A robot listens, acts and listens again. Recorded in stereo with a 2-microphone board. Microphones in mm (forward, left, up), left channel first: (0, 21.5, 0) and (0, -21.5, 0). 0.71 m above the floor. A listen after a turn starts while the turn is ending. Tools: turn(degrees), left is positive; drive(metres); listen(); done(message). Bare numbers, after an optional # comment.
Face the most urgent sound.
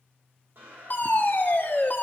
# The fire alarm: about 55° left or 125° left.
turn(55)
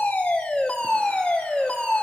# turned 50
# So it is at 40° left.
turn(40)
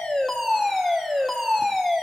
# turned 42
done("Facing the fire alarm, 2 to 4 m away.")